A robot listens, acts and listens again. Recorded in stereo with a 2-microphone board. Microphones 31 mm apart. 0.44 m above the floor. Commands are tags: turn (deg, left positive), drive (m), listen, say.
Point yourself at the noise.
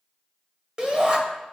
<turn deg="-30"/>
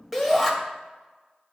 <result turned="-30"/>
<say>Found it: a shout, straight ahead, 1 to 2 m away.</say>